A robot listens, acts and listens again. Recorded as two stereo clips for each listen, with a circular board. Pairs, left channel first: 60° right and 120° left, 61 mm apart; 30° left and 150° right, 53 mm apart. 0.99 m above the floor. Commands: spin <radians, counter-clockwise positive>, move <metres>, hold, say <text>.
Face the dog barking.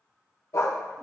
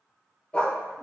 spin -0.52
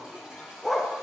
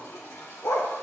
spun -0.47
spin 0.52
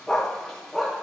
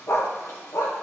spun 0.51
spin 0.70
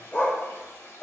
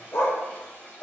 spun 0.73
spin 0.26
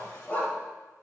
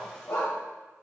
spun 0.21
spin 0.17
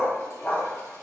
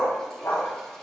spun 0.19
say Facing the dog barking.